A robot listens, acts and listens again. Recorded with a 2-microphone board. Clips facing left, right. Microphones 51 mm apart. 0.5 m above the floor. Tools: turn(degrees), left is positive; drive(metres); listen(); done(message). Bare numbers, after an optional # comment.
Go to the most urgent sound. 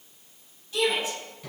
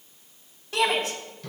# The shout: about 50° right or 130° right.
turn(-50)
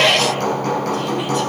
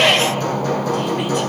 drive(1.0)
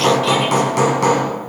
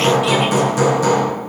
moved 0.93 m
listen()
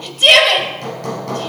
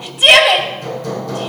# The shout is now 10° right.
turn(-10)
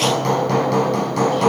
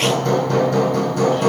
listen()
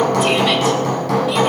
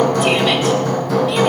listen()
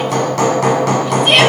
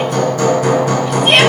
done("Facing where the shout came from. I can't hear it now. I did not reach it.")